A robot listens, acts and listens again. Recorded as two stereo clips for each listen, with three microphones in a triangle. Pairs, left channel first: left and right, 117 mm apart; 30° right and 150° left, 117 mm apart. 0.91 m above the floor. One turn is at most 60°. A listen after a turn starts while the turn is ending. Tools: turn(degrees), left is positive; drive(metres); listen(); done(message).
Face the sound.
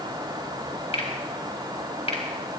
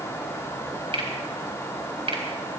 turn(degrees=60)
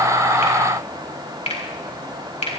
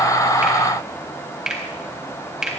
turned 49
turn(degrees=60)
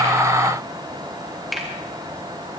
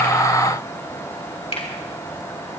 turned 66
done("Found it: a finger snap, straight ahead.")